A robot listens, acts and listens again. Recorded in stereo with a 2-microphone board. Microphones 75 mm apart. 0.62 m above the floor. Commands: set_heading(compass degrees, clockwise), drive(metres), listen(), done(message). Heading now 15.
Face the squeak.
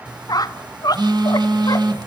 set_heading(315)
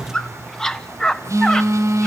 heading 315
set_heading(305)
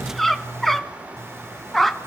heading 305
done("Found it: a squeak, straight ahead, under 1 m away.")